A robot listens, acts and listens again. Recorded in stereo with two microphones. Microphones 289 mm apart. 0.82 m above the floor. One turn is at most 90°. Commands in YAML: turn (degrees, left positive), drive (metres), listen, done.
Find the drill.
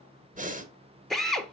turn: 30
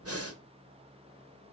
listen: true
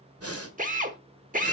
turn: -30
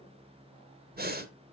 listen: true
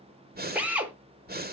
done: "Facing the drill."